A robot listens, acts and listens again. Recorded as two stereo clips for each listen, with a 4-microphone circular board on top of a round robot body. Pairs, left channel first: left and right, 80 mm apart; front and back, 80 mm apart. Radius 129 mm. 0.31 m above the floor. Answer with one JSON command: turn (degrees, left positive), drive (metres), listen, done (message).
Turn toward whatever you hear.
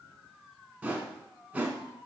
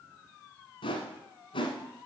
{"turn": -15}
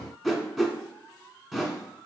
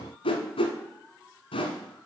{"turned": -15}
{"done": "Found it: a whoosh, straight ahead."}